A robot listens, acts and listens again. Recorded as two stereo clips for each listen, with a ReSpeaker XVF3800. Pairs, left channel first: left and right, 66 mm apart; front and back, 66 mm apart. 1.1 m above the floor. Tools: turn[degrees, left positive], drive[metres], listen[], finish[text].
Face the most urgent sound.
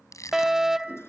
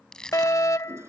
Thought: The fire alarm: 10° right.
Action: turn[-10]
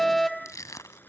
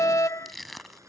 Action: finish[Found it: a fire alarm, straight ahead.]